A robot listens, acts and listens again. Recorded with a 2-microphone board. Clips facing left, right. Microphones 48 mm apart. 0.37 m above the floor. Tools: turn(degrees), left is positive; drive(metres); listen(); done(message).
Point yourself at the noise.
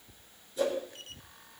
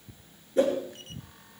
turn(degrees=-45)
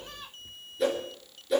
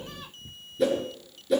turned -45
done("Found it: a whoosh, straight ahead, over 4 m away.")